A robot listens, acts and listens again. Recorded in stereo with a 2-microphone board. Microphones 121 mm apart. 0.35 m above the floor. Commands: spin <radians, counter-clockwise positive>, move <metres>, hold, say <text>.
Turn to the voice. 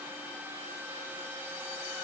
hold
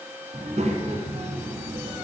spin -1.13
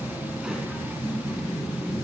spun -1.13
say Facing the child speaking, 2 to 4 m away.